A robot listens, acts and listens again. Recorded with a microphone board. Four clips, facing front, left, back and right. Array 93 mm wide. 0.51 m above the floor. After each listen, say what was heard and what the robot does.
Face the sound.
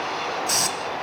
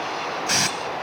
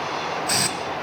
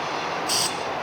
The hiss: 110° left. Turn 110° left.
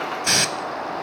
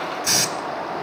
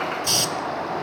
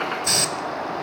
The hiss is now 10° left. Turn 10° left.
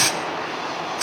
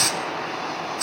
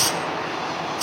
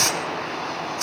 Facing the hiss, under 1 m away.